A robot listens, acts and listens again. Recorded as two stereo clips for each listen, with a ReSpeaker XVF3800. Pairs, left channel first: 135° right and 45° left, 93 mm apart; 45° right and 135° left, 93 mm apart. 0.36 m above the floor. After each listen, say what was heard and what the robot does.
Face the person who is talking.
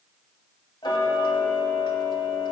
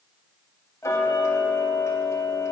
Keep listening.
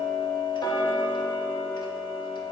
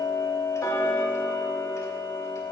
Keep listening.
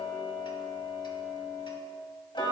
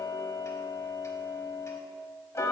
I can't make out anyone speaking to turn to.